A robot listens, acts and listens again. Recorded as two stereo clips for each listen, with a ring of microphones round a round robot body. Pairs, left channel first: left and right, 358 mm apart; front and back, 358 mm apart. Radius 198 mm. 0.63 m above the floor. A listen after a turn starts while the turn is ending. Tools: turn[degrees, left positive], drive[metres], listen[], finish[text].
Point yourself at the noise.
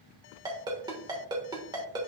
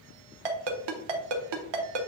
Thought: The ringtone: 170° right.
Action: turn[-170]
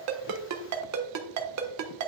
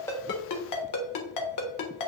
Thought: The ringtone is now 45° right.
Action: turn[-45]
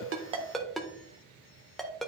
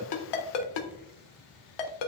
Action: finish[Facing the ringtone, 1 to 2 m away.]